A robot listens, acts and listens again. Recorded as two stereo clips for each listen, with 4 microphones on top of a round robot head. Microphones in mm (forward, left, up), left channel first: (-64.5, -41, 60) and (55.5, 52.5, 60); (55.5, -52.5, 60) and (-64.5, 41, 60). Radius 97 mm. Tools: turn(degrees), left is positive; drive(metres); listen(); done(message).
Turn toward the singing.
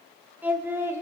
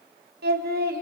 turn(degrees=110)
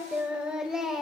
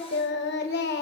turn(degrees=-50)
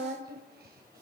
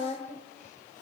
turn(degrees=10)
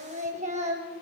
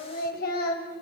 turn(degrees=-10)
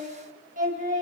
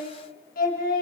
done("Found it: singing, straight ahead, 2 to 4 m away.")